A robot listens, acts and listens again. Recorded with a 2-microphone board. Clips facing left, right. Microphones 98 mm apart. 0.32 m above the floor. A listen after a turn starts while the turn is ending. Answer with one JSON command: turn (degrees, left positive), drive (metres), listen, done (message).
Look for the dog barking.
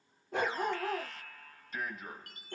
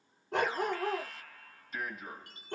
{"turn": -75}
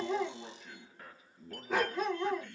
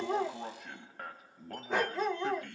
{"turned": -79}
{"done": "Found it: a dog barking, straight ahead, 1 to 2 m away."}